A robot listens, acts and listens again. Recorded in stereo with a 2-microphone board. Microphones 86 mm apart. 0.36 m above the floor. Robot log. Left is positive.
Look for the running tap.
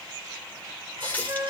note: The running tap: about 20° left or 160° left.
cmd yaw +20
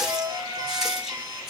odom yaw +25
end: Facing the running tap.